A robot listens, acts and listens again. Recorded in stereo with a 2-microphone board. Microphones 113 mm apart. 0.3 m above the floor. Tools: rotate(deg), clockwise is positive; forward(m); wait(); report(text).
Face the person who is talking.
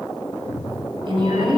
rotate(45)
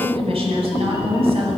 rotate(85)
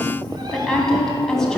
report("Found it: a woman speaking, straight ahead, 2 to 4 m away.")